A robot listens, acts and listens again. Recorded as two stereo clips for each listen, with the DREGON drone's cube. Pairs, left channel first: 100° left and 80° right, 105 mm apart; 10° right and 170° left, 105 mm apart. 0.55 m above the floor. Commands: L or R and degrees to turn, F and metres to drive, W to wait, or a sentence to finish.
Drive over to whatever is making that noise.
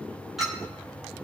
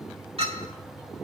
R170
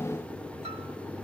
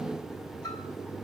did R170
W
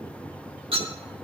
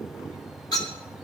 R60
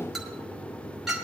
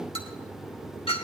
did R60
L10
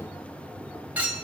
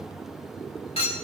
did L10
F1.0
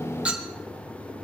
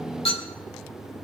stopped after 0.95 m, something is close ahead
Arrived at the clink, straight ahead.